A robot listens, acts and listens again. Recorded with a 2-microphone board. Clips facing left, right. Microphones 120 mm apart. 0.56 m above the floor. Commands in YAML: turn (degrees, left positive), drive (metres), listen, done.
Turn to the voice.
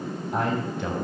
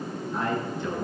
turn: 70
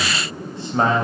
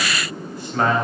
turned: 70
turn: 25
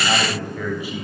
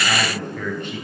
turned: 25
done: "Facing the man speaking, 2 to 4 m away."